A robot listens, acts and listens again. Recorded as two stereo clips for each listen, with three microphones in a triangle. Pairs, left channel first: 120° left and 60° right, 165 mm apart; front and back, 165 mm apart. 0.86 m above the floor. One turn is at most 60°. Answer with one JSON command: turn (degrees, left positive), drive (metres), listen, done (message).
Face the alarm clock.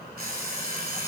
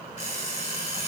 {"turn": -40}
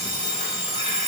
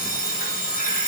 {"turn": -10}
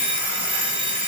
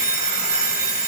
{"done": "Facing the alarm clock."}